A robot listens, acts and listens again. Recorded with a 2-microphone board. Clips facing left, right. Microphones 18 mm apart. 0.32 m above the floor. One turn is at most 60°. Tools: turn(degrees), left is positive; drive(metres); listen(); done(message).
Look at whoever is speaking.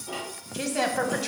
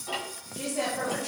turn(degrees=60)
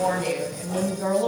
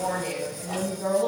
turn(degrees=30)
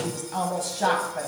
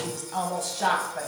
done("Facing the woman speaking, 1 to 2 m away.")